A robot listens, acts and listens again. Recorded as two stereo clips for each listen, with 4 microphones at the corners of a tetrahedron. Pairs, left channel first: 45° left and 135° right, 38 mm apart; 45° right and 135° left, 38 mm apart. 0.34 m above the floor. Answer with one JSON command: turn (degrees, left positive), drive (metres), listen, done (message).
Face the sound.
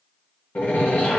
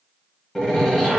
{"turn": 35}
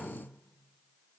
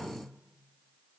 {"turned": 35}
{"done": "I heard a door slam from this way, but can't make it out now."}